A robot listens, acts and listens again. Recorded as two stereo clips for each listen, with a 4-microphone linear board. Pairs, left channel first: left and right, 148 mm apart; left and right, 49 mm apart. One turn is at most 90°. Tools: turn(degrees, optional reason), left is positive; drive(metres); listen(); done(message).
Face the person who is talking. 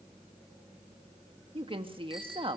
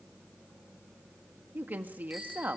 turn(degrees=-40, reason="The woman speaking: about 40° right or 140° right.")
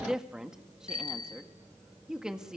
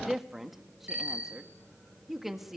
done("Facing the woman speaking, 1 to 2 m away.")